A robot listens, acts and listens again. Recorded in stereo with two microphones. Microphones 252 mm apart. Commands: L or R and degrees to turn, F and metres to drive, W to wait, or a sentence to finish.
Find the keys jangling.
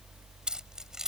L30
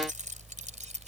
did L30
R30
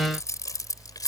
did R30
L15
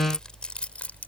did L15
Facing the keys jangling.